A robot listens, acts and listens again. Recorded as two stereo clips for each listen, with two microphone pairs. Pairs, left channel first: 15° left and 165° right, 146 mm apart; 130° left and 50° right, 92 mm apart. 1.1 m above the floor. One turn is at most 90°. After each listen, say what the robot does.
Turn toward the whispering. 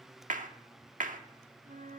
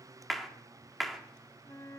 Keep listening.
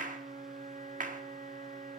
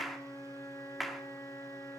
Keep listening.
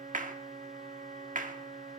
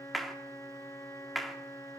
I can't make out whispering to turn to.